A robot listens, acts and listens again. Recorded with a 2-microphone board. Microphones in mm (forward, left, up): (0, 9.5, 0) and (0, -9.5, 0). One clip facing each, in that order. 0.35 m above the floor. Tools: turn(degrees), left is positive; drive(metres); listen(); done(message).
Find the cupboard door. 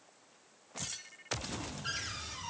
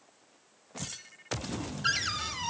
turn(degrees=-55)
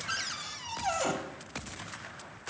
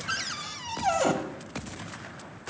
turn(degrees=-15)
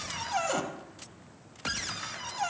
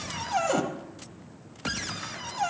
done("Found it: a cupboard door, straight ahead, under 1 m away.")